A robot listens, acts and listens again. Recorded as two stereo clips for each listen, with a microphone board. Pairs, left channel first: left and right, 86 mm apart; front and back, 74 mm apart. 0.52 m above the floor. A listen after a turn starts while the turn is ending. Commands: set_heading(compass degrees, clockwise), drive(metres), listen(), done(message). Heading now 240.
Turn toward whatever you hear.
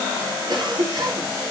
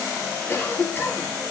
set_heading(300)
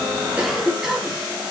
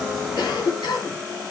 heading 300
done("Found it: a cough, straight ahead, 2 to 4 m away.")